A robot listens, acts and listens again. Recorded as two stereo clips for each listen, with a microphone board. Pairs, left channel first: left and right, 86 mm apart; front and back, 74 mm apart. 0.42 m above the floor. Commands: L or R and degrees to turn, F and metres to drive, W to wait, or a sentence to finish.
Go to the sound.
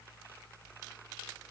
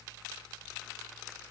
W
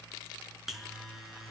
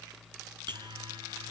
L180
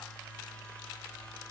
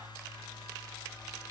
L15
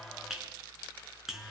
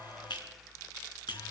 F1.0
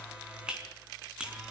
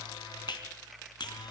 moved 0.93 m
R10
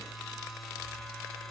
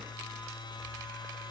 F1.0
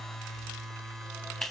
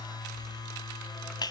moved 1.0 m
F1.0
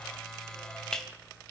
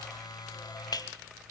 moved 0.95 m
L10
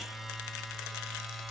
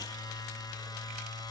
F1.0
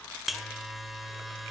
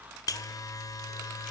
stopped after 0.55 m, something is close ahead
Arrived at the buzzer, straight ahead.